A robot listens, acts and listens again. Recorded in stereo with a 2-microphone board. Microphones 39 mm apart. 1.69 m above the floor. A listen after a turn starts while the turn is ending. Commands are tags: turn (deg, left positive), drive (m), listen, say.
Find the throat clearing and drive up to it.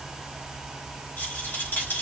<listen/>
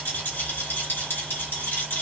<listen/>
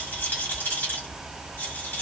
<say>I can't make out throat clearing, only a rattle.</say>